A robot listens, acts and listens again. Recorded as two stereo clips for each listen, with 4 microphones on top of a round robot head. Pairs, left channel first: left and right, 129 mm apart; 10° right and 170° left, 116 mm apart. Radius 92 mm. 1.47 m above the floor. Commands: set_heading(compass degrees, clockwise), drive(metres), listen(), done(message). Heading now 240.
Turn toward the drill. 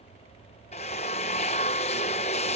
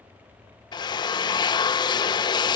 set_heading(200)
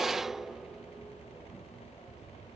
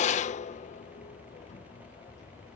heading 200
done("Facing the drill.")